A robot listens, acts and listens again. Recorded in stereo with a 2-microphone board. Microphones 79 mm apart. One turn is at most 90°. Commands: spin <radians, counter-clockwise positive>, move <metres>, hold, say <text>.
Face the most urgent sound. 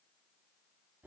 hold
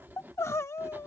spin 0.61
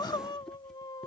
spin 1.57
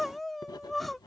say Facing the crying.